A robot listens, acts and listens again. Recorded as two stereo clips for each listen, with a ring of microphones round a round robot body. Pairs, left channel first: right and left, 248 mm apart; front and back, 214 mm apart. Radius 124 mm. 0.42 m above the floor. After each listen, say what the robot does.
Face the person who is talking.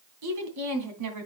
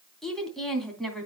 Turn 90° left.
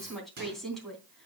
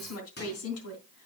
Facing the woman speaking, 2 to 4 m away.